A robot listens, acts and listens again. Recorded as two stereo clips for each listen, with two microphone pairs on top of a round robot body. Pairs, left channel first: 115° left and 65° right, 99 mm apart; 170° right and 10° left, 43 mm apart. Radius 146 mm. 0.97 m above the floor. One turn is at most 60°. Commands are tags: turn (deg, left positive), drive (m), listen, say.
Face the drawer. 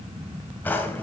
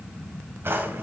<turn deg="45"/>
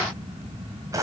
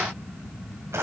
<say>Found it: a drawer, straight ahead.</say>